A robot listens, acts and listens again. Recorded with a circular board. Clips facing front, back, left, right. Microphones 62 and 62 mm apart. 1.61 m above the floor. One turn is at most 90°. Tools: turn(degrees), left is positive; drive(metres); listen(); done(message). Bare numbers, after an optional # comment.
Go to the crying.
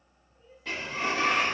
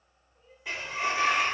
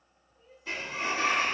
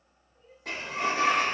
# The crying: 140° right.
turn(-90)
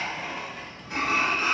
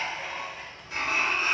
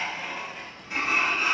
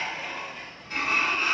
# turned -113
# Nothing new. It was at 30° right.
turn(-30)
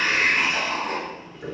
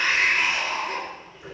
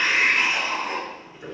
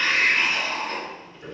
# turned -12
# Nothing new. It was at 15° right.
turn(-15)
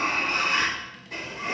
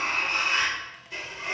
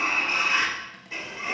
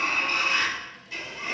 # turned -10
done("Facing where the crying came from. I can't hear it now. I did not reach it.")